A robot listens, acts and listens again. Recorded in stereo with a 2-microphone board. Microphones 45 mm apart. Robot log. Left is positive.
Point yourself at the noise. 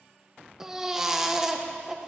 cmd yaw -30
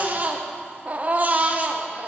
note: So it is at 140° right.
cmd yaw -140
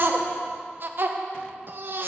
note: The baby crying is now 55° right.
cmd yaw -55
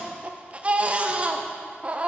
note: The baby crying is now 30° right.
cmd yaw -30
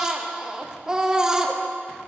note: The baby crying is now 15° right.
cmd yaw -15
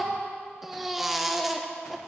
end: Found it: a baby crying, straight ahead.